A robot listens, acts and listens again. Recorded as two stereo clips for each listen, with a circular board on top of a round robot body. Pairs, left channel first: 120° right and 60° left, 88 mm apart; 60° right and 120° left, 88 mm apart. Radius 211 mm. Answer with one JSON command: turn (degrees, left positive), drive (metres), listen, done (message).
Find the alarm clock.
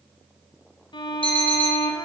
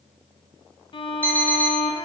{"turn": -135}
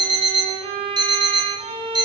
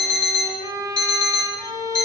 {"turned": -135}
{"turn": 20}
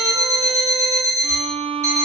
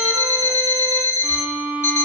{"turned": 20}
{"done": "Found it: an alarm clock, straight ahead."}